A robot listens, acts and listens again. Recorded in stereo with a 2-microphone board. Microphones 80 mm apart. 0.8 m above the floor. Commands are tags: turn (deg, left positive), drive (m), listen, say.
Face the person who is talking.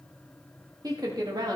<turn deg="-55"/>
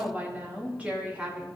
<turn deg="-20"/>
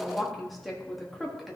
<say>Found it: a woman speaking, straight ahead, 1 to 2 m away.</say>